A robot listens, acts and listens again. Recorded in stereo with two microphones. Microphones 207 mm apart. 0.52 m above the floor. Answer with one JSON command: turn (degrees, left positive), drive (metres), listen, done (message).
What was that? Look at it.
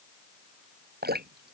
{"turn": -50}
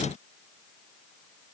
{"listen": true}
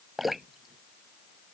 {"done": "Found it: dripping, straight ahead."}